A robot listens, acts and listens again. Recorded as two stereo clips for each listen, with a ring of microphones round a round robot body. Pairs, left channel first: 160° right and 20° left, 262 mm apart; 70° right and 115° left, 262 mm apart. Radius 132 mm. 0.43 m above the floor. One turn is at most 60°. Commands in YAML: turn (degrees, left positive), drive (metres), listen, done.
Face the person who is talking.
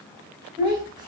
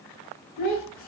turn: -50
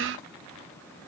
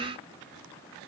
listen: true
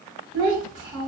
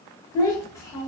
turn: 10
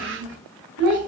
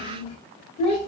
done: "Found it: a child speaking, straight ahead."